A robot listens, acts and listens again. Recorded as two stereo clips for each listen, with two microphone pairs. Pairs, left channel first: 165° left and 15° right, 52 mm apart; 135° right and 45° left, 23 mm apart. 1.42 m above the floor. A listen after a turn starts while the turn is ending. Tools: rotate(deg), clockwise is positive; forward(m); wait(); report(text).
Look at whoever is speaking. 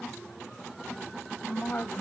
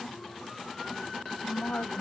rotate(135)
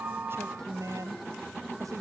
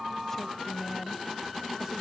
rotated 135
rotate(25)
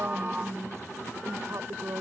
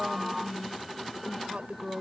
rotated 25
rotate(-10)
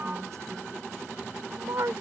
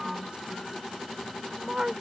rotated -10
report("Facing the woman speaking.")